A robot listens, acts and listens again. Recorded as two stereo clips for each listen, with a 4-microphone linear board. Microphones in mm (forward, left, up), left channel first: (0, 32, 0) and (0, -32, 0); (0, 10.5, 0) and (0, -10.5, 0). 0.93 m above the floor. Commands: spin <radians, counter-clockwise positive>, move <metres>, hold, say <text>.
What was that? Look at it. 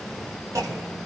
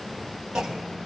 spin -0.96
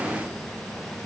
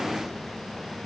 hold
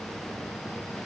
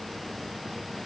say I heard a clunk, but can't make it out now. It was about straight ahead or 70° right.